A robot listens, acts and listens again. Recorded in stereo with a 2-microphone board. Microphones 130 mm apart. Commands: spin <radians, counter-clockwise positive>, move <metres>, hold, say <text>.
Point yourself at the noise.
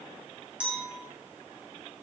spin -0.52
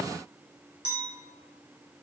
spin -2.44
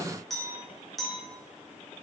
say Facing the clink.